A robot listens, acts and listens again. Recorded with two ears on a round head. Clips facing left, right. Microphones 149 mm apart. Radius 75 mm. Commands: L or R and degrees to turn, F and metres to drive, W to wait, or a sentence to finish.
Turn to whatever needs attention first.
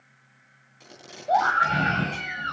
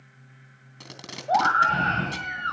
L20
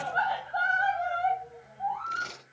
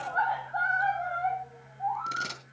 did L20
L140
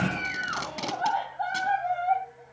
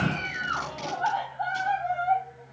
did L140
Found it: a scream, straight ahead.